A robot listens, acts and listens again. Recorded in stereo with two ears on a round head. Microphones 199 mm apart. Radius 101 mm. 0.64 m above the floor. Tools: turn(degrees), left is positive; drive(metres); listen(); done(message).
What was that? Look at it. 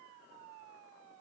listen()
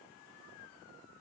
listen()
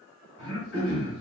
turn(degrees=50)
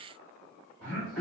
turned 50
done("Facing the throat clearing.")